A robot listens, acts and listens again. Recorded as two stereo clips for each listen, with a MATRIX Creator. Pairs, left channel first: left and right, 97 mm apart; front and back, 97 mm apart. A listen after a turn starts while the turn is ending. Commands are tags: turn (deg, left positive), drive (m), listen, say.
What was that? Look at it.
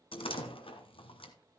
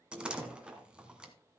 <turn deg="100"/>
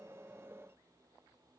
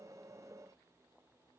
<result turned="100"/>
<say>I heard a door slam from this way, but can't make it out now.</say>